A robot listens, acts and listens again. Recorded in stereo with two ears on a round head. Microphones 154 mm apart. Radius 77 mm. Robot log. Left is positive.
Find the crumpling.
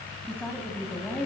cmd idle
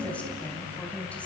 cmd idle
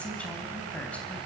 end: I can't make out crumpling to turn to.